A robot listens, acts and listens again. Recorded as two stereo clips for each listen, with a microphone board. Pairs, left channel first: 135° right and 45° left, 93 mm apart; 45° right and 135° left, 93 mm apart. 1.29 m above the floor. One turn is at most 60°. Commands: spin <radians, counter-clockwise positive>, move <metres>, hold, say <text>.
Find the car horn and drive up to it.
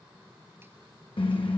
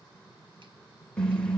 spin -1.05
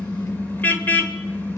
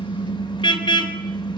spin -1.05
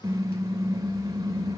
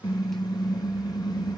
move 1.0
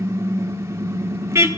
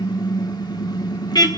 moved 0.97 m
spin -0.17
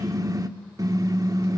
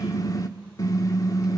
move 1.0
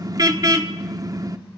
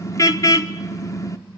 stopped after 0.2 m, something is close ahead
say Arrived at the car horn, straight ahead.